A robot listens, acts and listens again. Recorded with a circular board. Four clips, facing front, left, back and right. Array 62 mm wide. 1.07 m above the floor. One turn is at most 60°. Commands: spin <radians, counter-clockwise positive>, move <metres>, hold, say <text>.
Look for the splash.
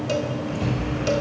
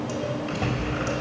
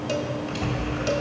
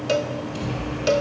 spin 1.05
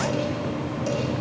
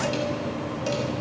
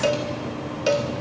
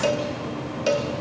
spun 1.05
spin 0.79
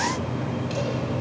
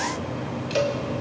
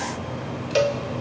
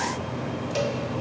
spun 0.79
say I heard a splash from this way, but can't make it out now.